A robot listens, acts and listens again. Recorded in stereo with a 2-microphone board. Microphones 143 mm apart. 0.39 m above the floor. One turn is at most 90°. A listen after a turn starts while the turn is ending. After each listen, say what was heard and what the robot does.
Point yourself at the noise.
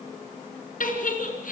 The giggle: about 70° left or 110° left. Turn 70° left.
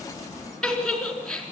Facing the giggle, 2 to 4 m away.